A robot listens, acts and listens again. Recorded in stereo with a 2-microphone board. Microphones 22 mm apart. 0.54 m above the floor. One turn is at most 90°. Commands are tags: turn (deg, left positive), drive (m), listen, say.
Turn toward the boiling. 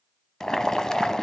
<turn deg="30"/>
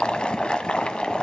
<turn deg="90"/>
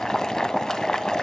<turn deg="35"/>
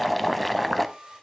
<say>Facing the boiling.</say>